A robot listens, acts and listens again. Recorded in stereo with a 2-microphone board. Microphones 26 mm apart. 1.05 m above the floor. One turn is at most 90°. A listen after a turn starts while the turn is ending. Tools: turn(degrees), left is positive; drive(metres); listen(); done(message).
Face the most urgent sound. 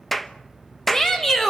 turn(degrees=15)
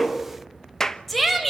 done("Facing the shout, over 4 m away.")